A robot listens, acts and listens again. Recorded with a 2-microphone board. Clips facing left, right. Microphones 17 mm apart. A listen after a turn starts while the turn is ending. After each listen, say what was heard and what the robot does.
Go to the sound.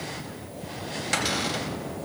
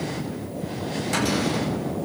Keep listening.
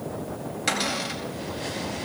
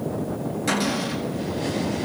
The cupboard door: about 30° left or 150° left. Turn 30° left.
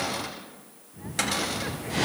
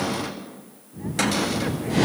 Drive 1.0 m forward.
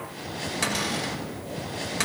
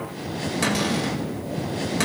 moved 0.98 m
Drive 1.0 m forward.
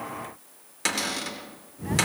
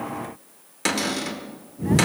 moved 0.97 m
Drive 1.0 m forward.
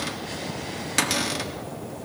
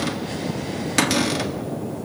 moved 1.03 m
The cupboard door is now 10° right. Turn 10° right.
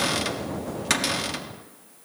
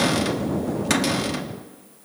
Drive 1.0 m forward.
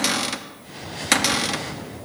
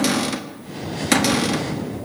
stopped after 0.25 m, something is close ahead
The cupboard door is now 10° left. Turn 10° left.
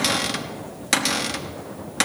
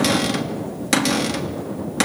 Arrived at the cupboard door, straight ahead.